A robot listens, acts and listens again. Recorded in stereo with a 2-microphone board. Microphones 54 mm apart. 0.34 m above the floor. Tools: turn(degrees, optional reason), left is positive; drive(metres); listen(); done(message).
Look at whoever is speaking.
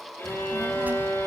turn(degrees=-30, reason="The child speaking: about 30° right or 150° right.")
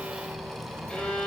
turn(degrees=-40, reason="The child speaking: about 40° right or 140° right.")
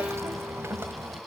turn(degrees=-130, reason="So it is at 130° right.")
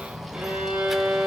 done("Found it: a child speaking, straight ahead, 1 to 2 m away.")